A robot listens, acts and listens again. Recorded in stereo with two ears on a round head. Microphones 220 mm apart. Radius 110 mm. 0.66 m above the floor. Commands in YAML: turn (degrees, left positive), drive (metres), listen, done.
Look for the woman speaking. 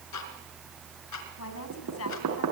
turn: 65
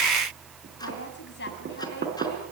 turn: 45
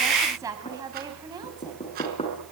turn: -15
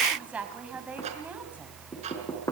done: "Facing the woman speaking, over 4 m away."